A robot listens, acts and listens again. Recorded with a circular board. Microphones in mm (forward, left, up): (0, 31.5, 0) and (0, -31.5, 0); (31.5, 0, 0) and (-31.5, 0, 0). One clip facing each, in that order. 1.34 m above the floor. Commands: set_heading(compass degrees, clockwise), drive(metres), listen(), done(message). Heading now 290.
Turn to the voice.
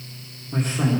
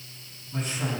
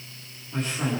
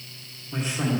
set_heading(180)
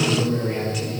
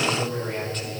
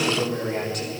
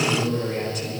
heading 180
set_heading(170)
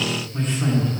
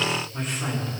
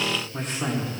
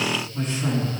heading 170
done("Facing the man speaking, 2 to 4 m away.")